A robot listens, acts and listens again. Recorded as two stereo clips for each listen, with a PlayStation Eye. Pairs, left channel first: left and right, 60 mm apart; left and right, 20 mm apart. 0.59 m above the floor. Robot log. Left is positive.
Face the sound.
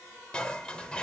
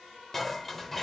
note: The dishes clattering: about 20° left or 160° left.
cmd yaw +20
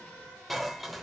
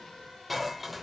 end: Found it: dishes clattering, straight ahead.